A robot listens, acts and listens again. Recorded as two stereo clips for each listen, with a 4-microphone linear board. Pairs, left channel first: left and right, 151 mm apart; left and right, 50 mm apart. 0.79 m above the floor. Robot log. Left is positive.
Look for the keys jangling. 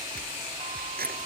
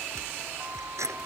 cmd yaw -90
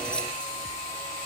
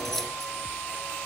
cmd idle
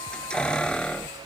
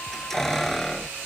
end: Facing the keys jangling.